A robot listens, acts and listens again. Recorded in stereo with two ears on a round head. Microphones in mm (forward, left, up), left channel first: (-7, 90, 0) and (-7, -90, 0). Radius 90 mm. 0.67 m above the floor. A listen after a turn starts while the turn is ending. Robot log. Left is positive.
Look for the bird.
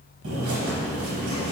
note: The bird: about 65° right or 115° right.
cmd yaw -65
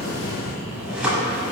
end: Found it: a bird, straight ahead.